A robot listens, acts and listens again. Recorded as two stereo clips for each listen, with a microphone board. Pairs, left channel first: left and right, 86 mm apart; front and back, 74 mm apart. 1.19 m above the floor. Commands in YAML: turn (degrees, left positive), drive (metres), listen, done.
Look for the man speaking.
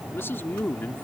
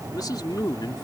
turn: 20
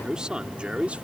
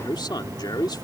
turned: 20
turn: -15
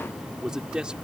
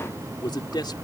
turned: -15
turn: -10
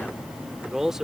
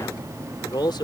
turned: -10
done: "Facing the man speaking."